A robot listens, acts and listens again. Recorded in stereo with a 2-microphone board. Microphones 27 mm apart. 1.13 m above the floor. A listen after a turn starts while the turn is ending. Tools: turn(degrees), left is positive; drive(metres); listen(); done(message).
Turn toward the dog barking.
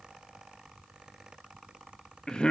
listen()
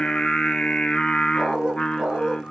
turn(degrees=-30)
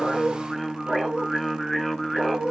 turn(degrees=-125)
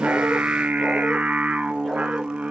listen()
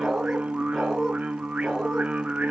done("Found it: a dog barking, straight ahead.")